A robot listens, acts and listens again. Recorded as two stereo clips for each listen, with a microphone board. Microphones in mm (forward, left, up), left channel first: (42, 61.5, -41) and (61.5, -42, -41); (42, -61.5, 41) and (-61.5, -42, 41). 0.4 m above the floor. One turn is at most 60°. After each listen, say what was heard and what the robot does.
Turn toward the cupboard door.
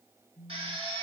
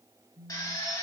Keep listening.
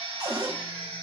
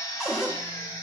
The cupboard door: 110° right. Turn 60° right.
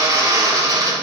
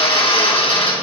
Nothing new. It was at 50° right. Turn 50° right.
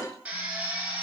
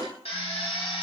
The cupboard door is now 45° right. Turn 45° right.
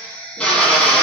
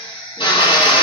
Keep listening.
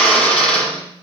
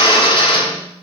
Keep listening.
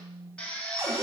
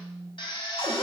The cupboard door is now 20° right. Turn 20° right.
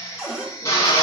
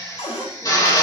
Facing the cupboard door.